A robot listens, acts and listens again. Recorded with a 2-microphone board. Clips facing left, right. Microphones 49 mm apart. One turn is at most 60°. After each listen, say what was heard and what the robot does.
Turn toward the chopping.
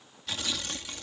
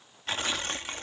Keep listening.
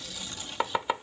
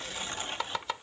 The chopping: about 20° left or 160° left. Turn 20° left.
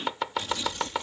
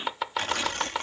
Found it: chopping, straight ahead.